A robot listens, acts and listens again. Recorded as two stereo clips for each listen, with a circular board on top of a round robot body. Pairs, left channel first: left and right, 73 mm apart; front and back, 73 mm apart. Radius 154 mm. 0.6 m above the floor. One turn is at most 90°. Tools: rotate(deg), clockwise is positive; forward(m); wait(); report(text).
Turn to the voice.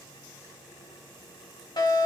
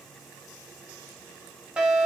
wait()
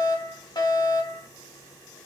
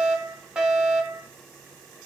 wait()
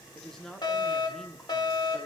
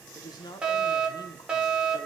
rotate(-10)
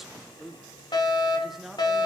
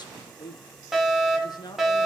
report("Facing the woman speaking, 2 to 4 m away.")